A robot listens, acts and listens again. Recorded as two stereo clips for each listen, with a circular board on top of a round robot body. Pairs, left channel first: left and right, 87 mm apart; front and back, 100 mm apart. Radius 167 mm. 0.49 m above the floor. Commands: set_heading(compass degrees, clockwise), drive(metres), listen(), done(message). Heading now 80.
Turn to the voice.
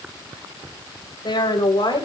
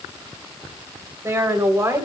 set_heading(320)
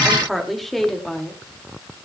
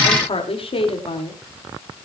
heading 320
done("Found it: a woman speaking, straight ahead.")